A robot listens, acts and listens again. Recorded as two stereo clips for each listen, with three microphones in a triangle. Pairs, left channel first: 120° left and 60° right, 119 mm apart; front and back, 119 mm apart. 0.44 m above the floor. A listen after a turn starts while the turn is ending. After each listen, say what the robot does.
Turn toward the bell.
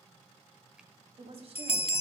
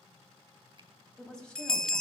Turn 85° left.
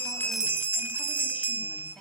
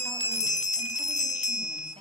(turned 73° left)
Turn 10° left.
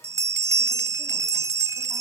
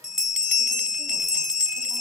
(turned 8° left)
Facing the bell.